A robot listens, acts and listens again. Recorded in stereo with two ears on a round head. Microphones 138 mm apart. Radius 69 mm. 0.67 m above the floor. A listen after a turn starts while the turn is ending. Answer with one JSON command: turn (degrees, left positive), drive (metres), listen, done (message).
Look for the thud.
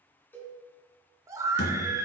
{"turn": 90}
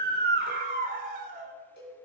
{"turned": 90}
{"done": "Facing where the thud came from. I can't hear it now."}